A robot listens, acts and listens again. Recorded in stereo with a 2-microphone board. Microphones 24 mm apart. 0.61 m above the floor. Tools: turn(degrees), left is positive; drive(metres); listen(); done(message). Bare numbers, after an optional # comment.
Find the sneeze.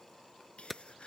# The sneeze: about 50° left or 130° left.
turn(50)
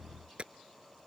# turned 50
listen()
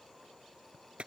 done("I heard a sneeze, but can't make it out now. It was about straight ahead or 80° left.")